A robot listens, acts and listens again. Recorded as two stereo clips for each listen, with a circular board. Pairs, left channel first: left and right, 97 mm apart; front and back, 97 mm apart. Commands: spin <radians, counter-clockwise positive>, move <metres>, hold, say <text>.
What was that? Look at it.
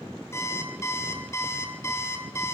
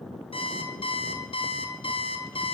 spin 0.44
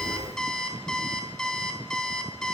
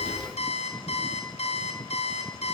say Facing the alarm clock, 2 to 4 m away.